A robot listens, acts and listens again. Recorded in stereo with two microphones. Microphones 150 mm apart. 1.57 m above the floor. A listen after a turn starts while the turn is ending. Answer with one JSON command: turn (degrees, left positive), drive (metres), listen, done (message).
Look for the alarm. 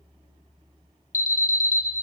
{"turn": 60}
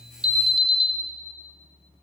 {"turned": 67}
{"done": "Found it: an alarm, straight ahead, under 1 m away."}